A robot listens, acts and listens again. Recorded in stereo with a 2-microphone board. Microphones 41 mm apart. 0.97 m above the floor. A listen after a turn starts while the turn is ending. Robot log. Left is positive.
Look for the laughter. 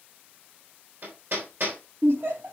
note: The laughter: about 60° right or 120° right.
cmd yaw -60
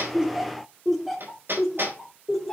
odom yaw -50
note: So it is at 10° left.
cmd yaw +10
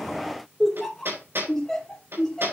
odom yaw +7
note: The laughter is now 15° left.
cmd yaw +15
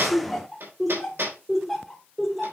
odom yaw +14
end: Facing the laughter.